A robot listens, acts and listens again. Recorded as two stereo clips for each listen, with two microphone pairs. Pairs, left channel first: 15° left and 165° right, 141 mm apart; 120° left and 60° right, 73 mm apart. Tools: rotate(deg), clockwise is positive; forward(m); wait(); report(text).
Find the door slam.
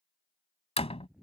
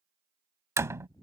rotate(20)
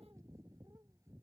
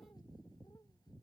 report("Facing where the door slam came from. I can't hear it now.")